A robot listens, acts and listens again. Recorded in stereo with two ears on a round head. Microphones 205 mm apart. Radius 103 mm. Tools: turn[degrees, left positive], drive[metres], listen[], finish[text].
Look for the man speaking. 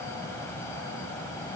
Action: listen[]
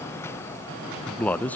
Action: turn[30]
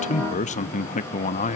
Thought: So it is at 140° left.
Action: turn[140]
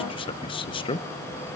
Thought: The man speaking is now 25° left.
Action: turn[25]
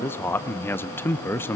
Thought: The man speaking is now 10° left.
Action: turn[10]
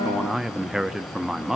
Action: finish[Found it: a man speaking, straight ahead.]